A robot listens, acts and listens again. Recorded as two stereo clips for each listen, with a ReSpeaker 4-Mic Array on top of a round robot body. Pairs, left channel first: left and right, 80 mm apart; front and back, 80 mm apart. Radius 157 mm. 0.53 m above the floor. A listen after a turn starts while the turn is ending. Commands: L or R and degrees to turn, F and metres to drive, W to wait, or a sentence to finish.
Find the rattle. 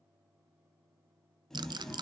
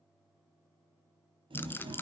R65
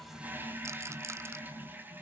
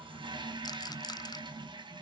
W
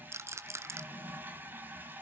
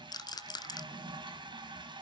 R35
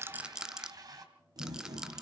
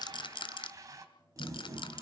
R10
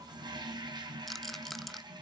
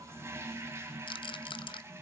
Found it: a rattle, straight ahead, 1 to 2 m away.